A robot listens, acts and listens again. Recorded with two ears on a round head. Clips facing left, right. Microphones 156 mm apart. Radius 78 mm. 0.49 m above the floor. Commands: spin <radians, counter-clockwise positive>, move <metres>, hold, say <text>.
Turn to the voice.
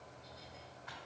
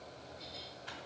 hold
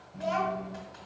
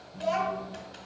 spin -0.52
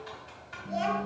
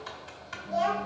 spin 0.35
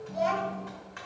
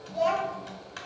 say Found it: a child speaking, straight ahead, 1 to 2 m away.